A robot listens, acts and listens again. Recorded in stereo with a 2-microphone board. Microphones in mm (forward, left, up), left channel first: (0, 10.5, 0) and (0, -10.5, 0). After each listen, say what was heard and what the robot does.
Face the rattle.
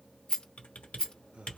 The rattle: about 40° left or 140° left. Turn 40° left.
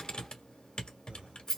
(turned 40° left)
Facing the rattle, 2 to 4 m away.